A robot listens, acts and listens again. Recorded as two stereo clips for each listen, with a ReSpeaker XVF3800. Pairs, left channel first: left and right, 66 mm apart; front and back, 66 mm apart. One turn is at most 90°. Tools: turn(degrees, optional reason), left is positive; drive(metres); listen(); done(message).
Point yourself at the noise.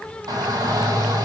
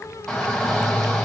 turn(degrees=-85, reason="The shout: 85° right.")
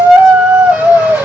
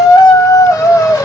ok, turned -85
turn(degrees=-30, reason="The shout is now 30° right.")
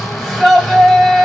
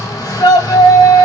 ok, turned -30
done("Facing the shout.")